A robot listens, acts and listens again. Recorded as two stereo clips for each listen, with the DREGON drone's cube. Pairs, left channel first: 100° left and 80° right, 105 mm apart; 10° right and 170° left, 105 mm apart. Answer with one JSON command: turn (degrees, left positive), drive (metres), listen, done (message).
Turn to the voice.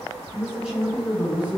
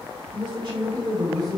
{"turn": -145}
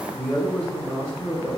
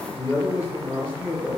{"turn": 70}
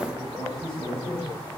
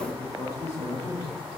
{"turn": 50}
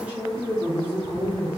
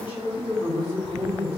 {"done": "Found it: a man speaking, straight ahead, 2 to 4 m away."}